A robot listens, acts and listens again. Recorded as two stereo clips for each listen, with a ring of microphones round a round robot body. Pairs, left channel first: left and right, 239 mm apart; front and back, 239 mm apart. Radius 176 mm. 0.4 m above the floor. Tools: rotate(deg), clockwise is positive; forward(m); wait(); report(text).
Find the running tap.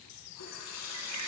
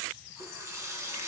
rotate(-105)
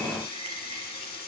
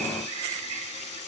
rotate(-40)
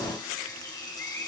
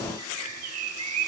wait()
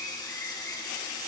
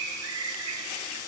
wait()
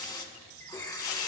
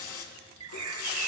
rotate(-15)
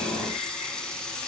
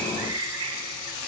report("Facing the running tap.")